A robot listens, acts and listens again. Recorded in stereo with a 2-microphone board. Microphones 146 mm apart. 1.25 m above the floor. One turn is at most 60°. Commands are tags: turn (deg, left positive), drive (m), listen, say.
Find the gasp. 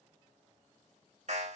<listen/>
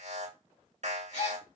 <turn deg="60"/>
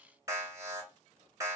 <listen/>
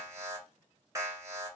<say>I heard a gasp, but can't make it out now. It was about straight ahead or 60° left.</say>